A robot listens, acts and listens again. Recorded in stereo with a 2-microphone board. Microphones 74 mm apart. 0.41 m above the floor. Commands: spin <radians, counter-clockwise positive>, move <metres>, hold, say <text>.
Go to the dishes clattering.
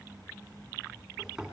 hold
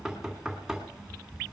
hold
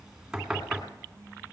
say I can't make out dishes clattering, only knocking.